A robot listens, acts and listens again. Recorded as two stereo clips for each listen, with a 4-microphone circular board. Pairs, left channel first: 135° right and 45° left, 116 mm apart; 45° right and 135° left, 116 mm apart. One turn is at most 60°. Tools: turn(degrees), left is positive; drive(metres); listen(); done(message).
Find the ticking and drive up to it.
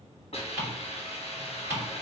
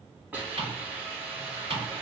turn(degrees=60)
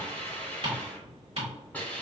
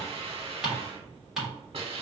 turn(degrees=50)
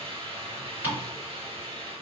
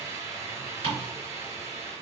turn(degrees=-25)
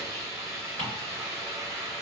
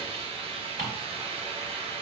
listen()
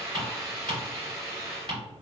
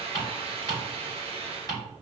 drive(metres=1.0)
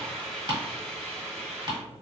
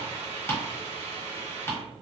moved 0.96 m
turn(degrees=20)
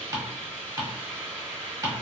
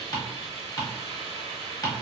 drive(metres=1.0)
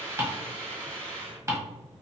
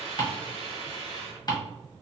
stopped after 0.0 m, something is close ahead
done("Arrived at the ticking, straight ahead.")